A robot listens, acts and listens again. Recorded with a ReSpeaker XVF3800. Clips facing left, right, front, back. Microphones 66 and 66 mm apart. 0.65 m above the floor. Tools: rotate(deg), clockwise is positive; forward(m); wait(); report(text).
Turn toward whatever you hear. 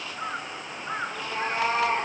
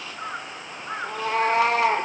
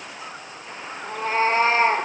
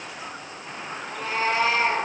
rotate(60)
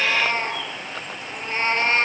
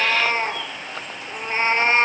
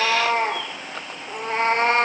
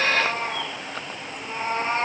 rotate(20)
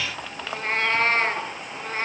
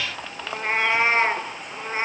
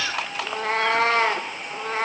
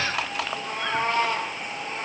rotate(10)
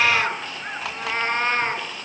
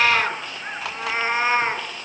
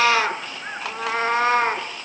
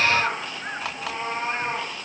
report("Found it: a cat meowing, straight ahead.")